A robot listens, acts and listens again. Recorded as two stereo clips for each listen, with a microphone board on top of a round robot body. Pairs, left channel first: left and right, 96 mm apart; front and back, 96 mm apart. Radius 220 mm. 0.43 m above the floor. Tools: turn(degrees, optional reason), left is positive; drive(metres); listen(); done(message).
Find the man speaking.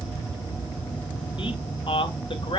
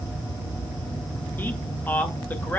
turn(degrees=70, reason="The man speaking: 70° left.")
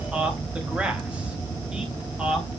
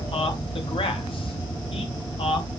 turn(degrees=-10, reason="The man speaking is now 10° right.")
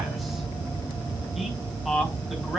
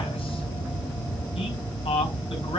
done("Found it: a man speaking, straight ahead.")